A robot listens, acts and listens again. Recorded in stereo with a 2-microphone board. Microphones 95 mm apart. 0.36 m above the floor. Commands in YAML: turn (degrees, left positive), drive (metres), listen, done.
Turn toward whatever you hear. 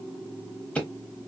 turn: 30
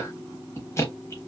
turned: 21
turn: 145
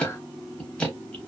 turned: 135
turn: 10
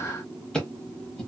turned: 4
turn: 10
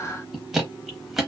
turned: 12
done: "Found it: ticking, straight ahead."